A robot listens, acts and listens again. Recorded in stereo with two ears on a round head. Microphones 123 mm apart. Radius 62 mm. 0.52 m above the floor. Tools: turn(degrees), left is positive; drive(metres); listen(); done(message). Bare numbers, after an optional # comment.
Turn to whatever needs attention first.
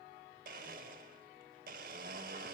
listen()
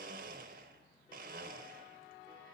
listen()
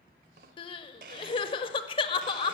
# The crying: about 40° left or 140° left.
turn(40)
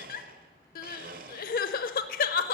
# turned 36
# So it is at 105° left.
turn(105)
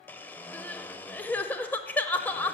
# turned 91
# The crying is now 15° left.
turn(15)
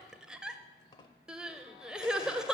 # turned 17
done("Found it: crying, straight ahead, under 1 m away.")